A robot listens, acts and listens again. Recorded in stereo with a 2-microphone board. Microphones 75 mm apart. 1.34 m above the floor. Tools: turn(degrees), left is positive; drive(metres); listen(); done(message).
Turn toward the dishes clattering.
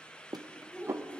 turn(degrees=-40)
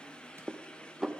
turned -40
done("Found it: dishes clattering, straight ahead, under 1 m away.")